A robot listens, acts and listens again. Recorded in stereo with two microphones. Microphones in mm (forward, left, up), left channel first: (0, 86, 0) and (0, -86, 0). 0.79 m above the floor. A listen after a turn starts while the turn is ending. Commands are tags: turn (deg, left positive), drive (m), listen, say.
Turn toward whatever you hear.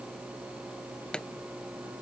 <turn deg="30"/>
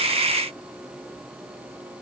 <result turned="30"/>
<listen/>
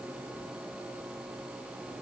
<say>I heard a pop, but can't make it out now. It was about 25° right or 145° left.</say>